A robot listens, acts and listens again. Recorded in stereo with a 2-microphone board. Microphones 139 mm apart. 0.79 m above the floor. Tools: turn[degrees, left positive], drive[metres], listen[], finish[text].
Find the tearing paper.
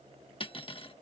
Action: listen[]
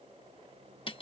Action: listen[]
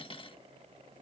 Action: finish[I can't make out tearing paper, only cutlery clinking.]